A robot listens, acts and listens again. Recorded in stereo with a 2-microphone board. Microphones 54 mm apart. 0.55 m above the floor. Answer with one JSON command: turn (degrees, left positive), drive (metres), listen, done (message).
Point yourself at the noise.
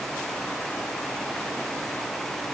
{"listen": true}
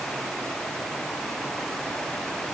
{"listen": true}
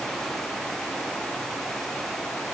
{"done": "I can't make out anything."}